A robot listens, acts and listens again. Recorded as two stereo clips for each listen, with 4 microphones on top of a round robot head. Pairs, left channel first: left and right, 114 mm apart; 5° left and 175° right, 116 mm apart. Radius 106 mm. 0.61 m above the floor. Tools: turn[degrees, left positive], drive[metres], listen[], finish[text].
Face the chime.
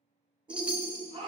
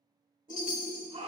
Thought: The chime: 10° right.
Action: turn[-10]
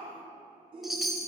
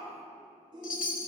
Action: finish[Facing the chime.]